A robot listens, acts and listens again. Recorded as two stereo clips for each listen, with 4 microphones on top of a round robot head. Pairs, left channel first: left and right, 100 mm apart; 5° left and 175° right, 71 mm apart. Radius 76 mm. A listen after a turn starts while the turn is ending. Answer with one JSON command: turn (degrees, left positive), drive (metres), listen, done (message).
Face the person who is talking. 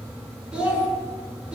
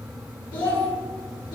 {"turn": -10}
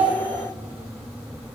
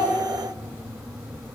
{"listen": true}
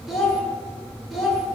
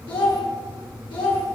{"done": "Facing the child speaking, 1 to 2 m away."}